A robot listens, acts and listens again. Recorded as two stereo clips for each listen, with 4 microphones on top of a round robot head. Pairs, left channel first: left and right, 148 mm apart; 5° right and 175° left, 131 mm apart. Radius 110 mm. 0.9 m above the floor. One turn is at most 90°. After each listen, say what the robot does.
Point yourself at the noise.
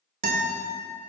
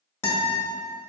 Turn 75° right.
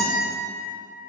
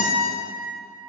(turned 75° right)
Facing the guitar.